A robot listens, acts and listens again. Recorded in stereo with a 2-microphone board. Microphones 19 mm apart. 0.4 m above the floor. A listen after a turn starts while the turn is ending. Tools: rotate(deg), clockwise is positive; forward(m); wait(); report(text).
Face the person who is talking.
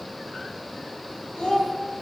rotate(-50)
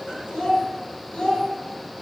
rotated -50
rotate(-75)
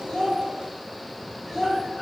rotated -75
report("Facing the child speaking.")